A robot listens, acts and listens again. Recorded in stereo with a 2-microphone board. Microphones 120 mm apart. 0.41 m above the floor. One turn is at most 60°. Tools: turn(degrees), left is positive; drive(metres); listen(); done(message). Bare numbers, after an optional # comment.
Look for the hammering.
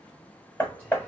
# The hammering: about 15° left or 165° left.
turn(15)
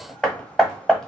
done("Found it: hammering, straight ahead.")